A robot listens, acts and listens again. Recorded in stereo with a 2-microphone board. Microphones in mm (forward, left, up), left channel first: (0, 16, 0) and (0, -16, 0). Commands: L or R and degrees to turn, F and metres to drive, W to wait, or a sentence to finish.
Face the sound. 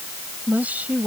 R50
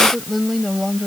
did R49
Found it: a woman speaking, straight ahead.